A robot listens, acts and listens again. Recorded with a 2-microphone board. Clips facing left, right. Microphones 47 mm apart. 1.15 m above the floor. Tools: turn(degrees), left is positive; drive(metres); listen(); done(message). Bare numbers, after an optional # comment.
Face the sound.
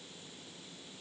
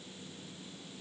listen()
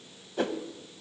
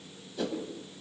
# The whoosh: about 50° left or 130° left.
turn(50)
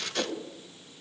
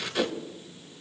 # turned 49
# So it is at 10° left.
turn(10)
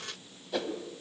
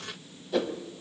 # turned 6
done("Found it: a whoosh, straight ahead.")